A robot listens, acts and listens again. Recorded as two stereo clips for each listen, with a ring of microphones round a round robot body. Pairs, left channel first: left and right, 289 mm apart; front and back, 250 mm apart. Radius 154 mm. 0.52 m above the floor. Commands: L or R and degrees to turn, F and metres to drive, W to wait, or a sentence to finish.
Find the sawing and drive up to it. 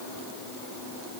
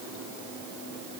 W
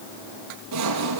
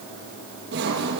R125
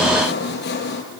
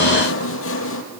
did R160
L35
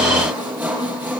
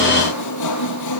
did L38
F1.0
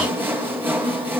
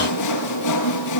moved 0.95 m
F1.0
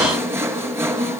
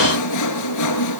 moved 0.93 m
R10
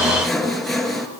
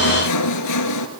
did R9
F1.0
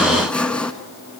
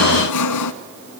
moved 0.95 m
F1.0
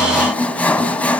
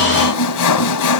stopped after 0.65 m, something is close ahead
I am next to the sawing.